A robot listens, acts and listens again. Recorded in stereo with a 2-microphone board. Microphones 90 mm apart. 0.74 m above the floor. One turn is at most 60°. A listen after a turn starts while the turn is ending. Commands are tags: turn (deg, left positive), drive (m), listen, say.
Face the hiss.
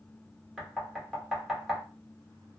<listen/>
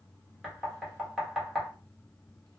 <listen/>
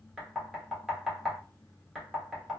<say>I can't make out a hiss to turn to.</say>